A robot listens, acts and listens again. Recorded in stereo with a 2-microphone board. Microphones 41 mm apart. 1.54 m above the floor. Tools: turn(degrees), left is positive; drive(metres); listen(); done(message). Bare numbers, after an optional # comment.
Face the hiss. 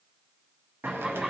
# The hiss: about 70° right or 110° right.
turn(-70)
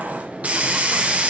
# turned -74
# So it is at 35° right.
turn(-35)
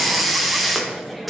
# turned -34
done("Facing the hiss.")